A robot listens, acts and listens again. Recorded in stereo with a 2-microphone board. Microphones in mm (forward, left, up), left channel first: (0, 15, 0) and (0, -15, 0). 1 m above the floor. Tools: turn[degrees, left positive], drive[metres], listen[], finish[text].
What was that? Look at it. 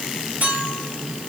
Thought: The clink: about 75° right or 105° right.
Action: turn[-75]
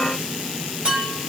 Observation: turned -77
Thought: So it is at 30° right.
Action: turn[-30]
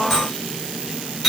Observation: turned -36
Action: finish[Facing the clink, over 4 m away.]